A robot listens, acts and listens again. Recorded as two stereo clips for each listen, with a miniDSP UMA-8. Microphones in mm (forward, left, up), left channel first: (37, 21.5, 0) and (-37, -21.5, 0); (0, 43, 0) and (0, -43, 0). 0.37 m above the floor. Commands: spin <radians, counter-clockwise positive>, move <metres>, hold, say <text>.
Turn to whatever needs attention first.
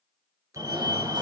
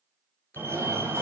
spin -2.53
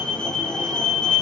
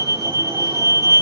spin -0.87
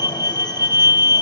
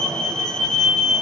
spin 0.17
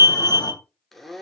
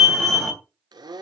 say Found it: a fire alarm, straight ahead, 2 to 4 m away.